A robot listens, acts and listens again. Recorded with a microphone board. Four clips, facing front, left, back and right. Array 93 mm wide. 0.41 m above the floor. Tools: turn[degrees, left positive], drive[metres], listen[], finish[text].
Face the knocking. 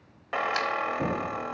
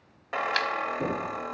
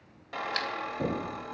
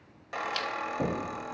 Thought: The knocking: 95° right.
Action: turn[-95]
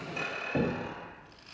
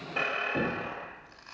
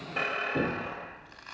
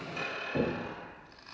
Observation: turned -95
Action: finish[Facing the knocking.]